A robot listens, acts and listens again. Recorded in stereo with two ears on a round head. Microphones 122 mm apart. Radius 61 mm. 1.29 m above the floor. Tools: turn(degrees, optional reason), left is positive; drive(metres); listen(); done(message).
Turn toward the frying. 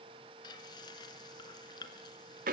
turn(degrees=30, reason="The frying: about 30° left or 150° left.")
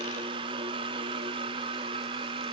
listen()
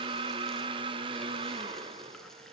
listen()
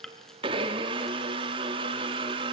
done("Found it: frying, straight ahead, 2 to 4 m away.")